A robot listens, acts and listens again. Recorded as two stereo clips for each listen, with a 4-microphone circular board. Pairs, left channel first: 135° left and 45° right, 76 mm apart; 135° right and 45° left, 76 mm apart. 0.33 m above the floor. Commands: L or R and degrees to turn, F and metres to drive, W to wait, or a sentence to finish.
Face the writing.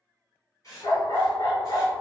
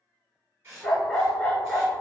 L100
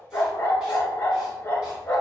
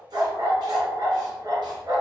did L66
L35
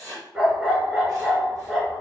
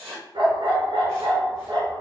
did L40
Found it: writing, straight ahead.